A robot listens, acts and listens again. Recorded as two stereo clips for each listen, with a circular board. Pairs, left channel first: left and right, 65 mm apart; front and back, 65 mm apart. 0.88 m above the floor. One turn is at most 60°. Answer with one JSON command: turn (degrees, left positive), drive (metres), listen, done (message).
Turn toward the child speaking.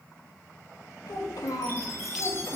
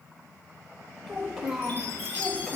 {"turn": 60}
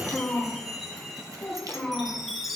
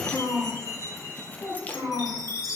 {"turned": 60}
{"turn": 10}
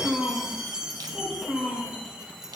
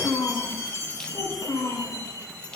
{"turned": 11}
{"turn": -10}
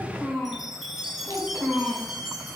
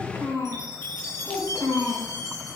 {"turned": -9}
{"done": "Found it: a child speaking, straight ahead."}